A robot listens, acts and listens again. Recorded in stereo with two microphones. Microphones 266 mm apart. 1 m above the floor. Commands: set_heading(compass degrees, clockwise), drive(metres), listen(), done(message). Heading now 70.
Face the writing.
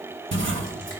set_heading(120)
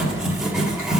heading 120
done("Facing the writing.")